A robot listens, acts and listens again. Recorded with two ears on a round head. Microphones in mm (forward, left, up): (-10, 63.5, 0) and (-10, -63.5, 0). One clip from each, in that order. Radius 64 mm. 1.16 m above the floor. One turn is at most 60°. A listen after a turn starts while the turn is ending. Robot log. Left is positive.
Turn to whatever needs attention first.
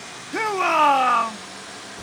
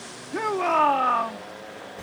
note: The shout: about 45° left or 135° left.
cmd yaw +45
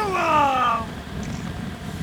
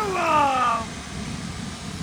end: Facing the shout.